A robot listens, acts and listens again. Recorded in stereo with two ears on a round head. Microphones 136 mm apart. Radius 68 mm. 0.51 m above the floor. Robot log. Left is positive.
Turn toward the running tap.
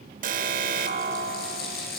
note: The running tap: about 75° left or 105° left.
cmd yaw +75
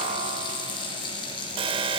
note: So it is at 30° left.
cmd yaw +30
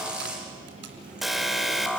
note: The running tap is now 10° right.
cmd yaw -10
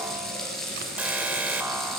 end: Found it: a running tap, straight ahead.